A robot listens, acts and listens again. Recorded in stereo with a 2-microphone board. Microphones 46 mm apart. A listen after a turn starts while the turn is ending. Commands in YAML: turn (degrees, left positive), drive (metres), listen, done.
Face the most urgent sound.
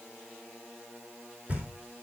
listen: true
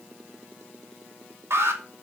turn: -70
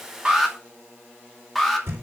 done: "Facing the alarm."